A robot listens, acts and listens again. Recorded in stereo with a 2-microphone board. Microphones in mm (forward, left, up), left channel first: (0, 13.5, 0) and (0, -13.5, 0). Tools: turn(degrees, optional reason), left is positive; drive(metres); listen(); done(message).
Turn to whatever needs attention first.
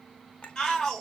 turn(degrees=30, reason="The shout: about 30° left or 150° left.")
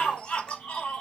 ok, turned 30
turn(degrees=120, reason="So it is at 120° left.")
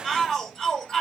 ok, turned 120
turn(degrees=10, reason="The shout is now 10° left.")
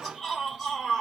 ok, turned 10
done("Facing the shout.")